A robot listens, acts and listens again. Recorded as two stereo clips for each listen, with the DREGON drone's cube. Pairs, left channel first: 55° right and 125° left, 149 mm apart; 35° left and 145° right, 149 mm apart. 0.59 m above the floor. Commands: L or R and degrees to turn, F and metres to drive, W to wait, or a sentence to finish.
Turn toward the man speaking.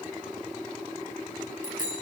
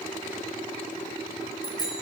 W
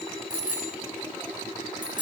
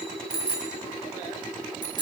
W
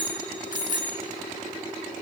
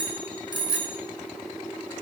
I can't make out a man speaking to turn to.